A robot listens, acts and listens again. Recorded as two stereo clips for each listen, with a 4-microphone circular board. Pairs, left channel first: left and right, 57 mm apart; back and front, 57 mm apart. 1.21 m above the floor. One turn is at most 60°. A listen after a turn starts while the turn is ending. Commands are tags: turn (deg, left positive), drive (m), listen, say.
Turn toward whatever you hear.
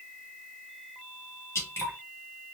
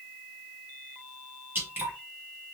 <turn deg="55"/>
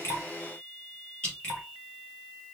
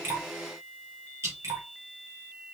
<turn deg="20"/>
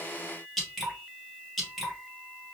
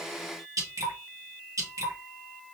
<say>Facing the dripping, 2 to 4 m away.</say>